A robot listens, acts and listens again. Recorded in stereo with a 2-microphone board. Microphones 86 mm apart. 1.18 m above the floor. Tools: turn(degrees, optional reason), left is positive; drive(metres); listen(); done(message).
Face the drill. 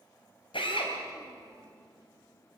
turn(degrees=75, reason="The drill: about 75° left or 105° left.")
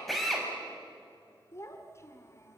done("Facing the drill.")